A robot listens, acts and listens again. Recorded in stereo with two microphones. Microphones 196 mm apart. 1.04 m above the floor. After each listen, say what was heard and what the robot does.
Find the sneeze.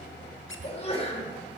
The sneeze: about 30° left or 150° left. Turn 30° left.
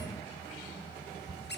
Keep listening.
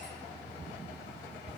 I heard a sneeze, but can't make it out now. It was about straight ahead or 120° left.